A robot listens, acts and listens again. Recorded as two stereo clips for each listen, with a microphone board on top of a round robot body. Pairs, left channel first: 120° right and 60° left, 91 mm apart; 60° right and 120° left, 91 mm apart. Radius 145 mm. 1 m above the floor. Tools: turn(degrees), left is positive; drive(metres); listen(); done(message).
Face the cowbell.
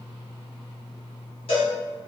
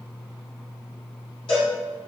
turn(degrees=-100)
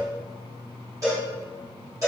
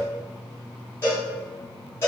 done("Found it: a cowbell, straight ahead.")